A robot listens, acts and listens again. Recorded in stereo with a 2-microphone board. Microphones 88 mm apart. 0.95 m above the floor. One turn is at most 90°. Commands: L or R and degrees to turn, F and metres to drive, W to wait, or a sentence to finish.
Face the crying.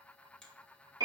W
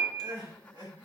R90
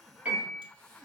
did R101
L15
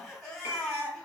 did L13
Found it: crying, straight ahead, 2 to 4 m away.